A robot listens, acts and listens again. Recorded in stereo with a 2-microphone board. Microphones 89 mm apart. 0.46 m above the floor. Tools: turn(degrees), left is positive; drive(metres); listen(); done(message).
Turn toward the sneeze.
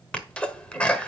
turn(degrees=30)
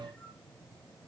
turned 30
listen()
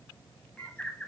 done("I heard a sneeze, but can't make it out now. It was about 15° right or 135° left.")